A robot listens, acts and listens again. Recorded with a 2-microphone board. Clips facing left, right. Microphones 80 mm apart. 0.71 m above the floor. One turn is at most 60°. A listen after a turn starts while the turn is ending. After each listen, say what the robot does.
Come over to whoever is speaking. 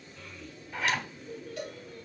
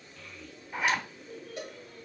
Turn 30° left.
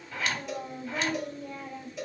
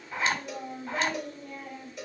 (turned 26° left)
Turn 60° left.
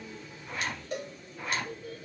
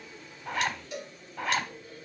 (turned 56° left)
Turn 60° left.
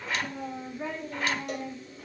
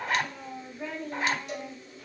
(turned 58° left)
Turn 25° left.
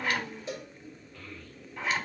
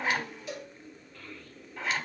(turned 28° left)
Keep listening.
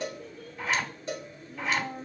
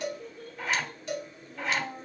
Drive 1.0 m forward.
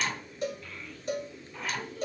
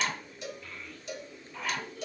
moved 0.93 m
Drive 1.0 m forward.
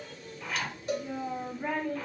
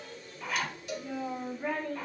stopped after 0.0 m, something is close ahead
I am next to the child speaking.